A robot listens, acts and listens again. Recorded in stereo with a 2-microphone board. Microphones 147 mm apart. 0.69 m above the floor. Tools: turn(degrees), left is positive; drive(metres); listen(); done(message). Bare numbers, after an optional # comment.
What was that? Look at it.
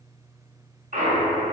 # The clunk: about 65° right or 115° right.
turn(-65)
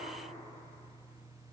listen()
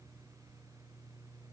done("I heard a clunk, but can't make it out now. It was about straight ahead or 50° right.")